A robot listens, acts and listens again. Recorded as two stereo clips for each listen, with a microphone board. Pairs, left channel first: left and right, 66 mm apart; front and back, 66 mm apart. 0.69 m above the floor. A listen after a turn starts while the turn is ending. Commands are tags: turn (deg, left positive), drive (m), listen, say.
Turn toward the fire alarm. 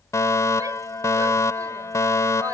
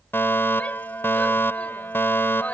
<turn deg="55"/>
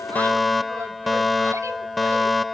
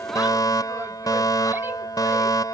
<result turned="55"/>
<say>Facing the fire alarm.</say>